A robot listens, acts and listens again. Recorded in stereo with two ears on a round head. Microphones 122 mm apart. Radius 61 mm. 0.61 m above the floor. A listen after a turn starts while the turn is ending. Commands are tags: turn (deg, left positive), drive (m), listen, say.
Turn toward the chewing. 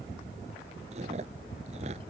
<turn deg="-50"/>
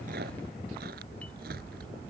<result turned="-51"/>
<listen/>
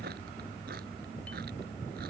<turn deg="-75"/>
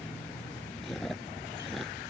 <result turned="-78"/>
<say>Found it: chewing, straight ahead.</say>